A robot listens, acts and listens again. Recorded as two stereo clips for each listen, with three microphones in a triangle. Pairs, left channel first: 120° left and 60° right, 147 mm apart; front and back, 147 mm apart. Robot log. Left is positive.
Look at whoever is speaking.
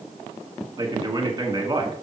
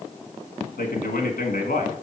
end: Found it: a man speaking, straight ahead, 1 to 2 m away.